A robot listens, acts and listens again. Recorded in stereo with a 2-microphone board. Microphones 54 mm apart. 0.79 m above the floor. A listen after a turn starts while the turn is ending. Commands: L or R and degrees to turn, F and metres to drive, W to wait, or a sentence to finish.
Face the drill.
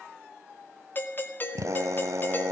R60
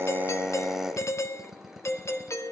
Facing the drill, 1 to 2 m away.